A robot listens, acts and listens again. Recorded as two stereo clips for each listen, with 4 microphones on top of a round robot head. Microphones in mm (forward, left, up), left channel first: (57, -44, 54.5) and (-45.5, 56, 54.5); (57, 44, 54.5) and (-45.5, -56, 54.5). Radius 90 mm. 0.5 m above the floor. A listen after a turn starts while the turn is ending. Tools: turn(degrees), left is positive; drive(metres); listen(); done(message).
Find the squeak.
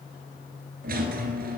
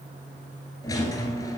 turn(degrees=110)
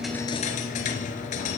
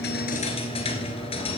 done("Found it: a squeak, straight ahead, 1 to 2 m away.")